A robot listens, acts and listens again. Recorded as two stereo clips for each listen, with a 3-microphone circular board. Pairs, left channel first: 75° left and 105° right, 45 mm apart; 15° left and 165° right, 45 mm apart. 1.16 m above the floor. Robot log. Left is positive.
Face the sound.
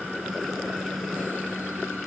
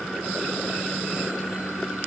cmd idle
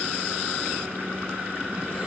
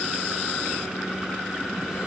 cmd idle
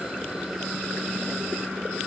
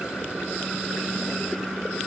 end: I can't make out anything.